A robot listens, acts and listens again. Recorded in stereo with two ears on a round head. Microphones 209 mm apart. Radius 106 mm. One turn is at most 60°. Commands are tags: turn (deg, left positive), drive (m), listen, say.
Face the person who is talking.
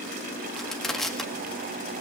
<listen/>
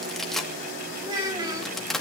<turn deg="-15"/>
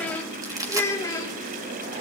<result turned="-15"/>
<turn deg="15"/>
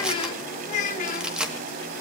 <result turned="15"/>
<turn deg="35"/>
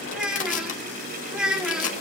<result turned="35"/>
<say>Facing the child speaking.</say>